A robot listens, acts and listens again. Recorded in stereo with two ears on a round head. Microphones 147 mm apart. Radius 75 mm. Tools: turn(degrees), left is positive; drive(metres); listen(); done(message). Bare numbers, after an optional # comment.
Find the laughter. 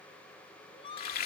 # The laughter: about 35° left or 145° left.
turn(35)
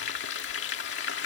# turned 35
listen()
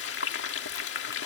listen()
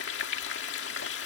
done("I heard laughter, but can't make it out now. It was about straight ahead or 110° left.")